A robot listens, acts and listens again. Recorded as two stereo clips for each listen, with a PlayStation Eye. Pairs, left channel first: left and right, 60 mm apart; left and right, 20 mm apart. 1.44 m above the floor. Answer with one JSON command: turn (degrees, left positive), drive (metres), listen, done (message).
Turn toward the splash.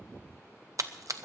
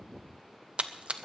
{"turn": -65}
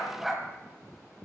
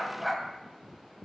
{"listen": true}
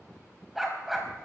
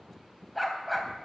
{"done": "I heard a splash, but can't make it out now. It was about straight ahead or 50° right."}